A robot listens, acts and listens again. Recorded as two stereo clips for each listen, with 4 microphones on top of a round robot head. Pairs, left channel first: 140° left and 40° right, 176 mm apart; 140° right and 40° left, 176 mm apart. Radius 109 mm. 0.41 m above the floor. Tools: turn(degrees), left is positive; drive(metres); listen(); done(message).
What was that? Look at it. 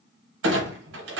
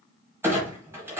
turn(degrees=-40)
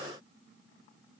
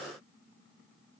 done("Facing where the clunk came from. I can't hear it now.")